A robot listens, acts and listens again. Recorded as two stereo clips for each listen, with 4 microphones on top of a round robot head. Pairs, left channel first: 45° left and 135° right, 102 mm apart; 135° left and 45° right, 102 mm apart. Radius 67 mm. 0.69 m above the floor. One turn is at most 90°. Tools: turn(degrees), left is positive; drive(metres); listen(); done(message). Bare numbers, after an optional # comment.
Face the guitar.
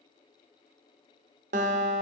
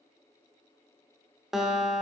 # The guitar: 130° right.
turn(-90)
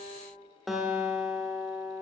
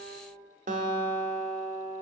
# The guitar is now 45° right.
turn(-45)
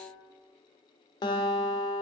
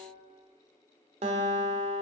# The guitar is now 10° right.
turn(-10)
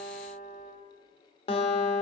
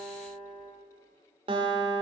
done("Facing the guitar.")